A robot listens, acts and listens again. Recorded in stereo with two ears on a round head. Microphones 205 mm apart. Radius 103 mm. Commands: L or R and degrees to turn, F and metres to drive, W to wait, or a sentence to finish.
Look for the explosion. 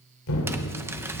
L65
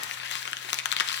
W
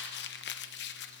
I heard an explosion, but can't make it out now. It was about straight ahead or 50° left.